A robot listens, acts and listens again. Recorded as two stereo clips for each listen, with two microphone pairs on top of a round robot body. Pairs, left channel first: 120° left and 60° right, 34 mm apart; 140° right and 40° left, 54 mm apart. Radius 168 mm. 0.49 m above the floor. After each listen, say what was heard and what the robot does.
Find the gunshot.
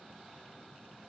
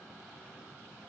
Keep listening.
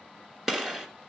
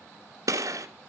The gunshot: 10° left. Turn 10° left.
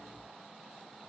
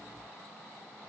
Facing where the gunshot came from. I can't hear it now.